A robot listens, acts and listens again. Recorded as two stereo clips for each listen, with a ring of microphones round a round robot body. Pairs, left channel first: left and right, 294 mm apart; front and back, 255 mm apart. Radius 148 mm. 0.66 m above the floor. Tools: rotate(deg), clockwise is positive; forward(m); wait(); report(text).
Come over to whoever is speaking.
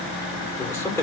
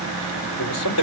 rotate(-10)
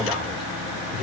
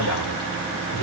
forward(1.0)
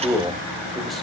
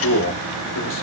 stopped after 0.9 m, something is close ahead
report("I am next to the man speaking.")